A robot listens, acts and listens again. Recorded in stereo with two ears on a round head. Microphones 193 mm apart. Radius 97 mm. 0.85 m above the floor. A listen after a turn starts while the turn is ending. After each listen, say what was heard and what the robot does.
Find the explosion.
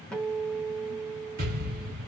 The explosion: about 40° right or 140° right. Turn 40° right.
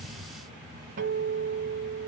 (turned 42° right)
Keep listening.
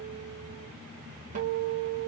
I heard an explosion, but can't make it out now. It was about straight ahead or 95° right.